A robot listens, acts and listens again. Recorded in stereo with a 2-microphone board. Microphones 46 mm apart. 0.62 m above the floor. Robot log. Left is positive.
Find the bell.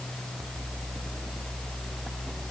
cmd idle
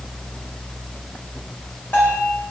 note: The bell: about 60° left or 120° left.
cmd yaw +60
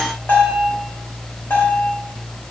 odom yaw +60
note: So it is at 55° left.
cmd yaw +55
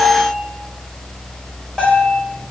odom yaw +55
note: The bell is now 10° left.
cmd yaw +10
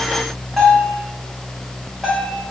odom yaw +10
end: Found it: a bell, straight ahead, 2 to 4 m away.